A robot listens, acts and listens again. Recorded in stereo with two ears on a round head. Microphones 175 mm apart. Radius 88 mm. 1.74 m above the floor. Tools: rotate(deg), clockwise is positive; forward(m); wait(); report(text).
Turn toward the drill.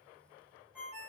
wait()
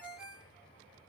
wait()
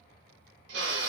rotate(60)
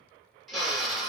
report("Facing the drill.")